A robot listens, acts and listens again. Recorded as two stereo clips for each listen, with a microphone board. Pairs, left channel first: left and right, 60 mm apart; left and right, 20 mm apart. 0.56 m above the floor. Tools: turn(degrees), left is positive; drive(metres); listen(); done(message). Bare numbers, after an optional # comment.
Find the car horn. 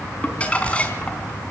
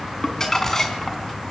listen()
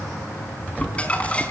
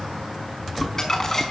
listen()
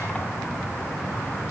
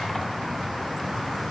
done("I can't make out a car horn to turn to.")